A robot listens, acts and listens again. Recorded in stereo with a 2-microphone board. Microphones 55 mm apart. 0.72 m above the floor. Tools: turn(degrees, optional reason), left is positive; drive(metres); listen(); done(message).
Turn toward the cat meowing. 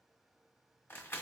listen()
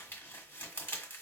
listen()
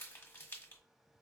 done("I can't make out a cat meowing, only crumpling.")